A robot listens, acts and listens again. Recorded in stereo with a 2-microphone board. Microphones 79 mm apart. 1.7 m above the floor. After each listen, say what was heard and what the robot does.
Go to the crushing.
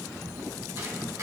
Keep listening.
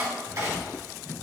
Keep listening.
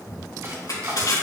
The crushing: about 60° left or 120° left. Turn 60° left.
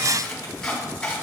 Keep listening.
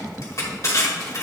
So it is at 55° left. Turn 55° left.
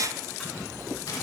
Keep listening.
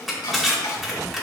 Drive 1.0 m forward.
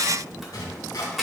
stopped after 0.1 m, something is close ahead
Something is in my way. I am facing the crushing but have not reached it.